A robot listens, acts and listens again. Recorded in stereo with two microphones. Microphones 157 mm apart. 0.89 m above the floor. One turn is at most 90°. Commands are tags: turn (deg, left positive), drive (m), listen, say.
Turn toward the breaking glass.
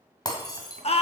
<turn deg="25"/>
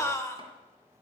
<listen/>
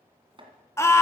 <say>I heard breaking glass, but can't make it out now. It was about straight ahead or 130° left.</say>